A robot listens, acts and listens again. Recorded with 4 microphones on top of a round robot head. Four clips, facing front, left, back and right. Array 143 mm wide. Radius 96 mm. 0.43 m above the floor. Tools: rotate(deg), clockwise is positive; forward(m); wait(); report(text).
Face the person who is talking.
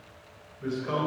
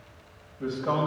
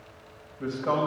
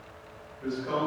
rotate(-155)
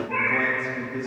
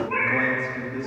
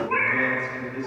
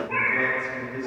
rotate(-55)
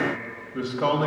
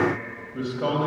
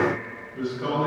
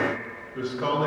rotate(-25)
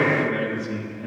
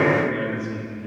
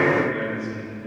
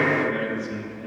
report("Found it: a man speaking, straight ahead.")